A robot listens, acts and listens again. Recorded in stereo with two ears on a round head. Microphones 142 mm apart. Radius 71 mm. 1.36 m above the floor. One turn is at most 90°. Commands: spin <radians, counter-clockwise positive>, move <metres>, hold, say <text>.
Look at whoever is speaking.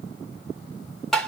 hold
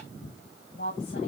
spin 1.57
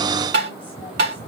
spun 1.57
hold
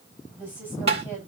spin -0.17
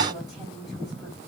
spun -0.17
say Facing the woman speaking.